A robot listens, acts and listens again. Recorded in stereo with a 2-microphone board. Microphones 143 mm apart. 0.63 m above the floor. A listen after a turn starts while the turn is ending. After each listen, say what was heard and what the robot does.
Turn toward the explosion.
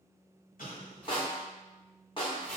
The explosion: about 75° left or 105° left. Turn 75° left.
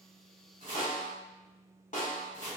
Keep listening.
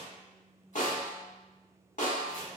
I heard an explosion, but can't make it out now. It was about straight ahead or 30° left.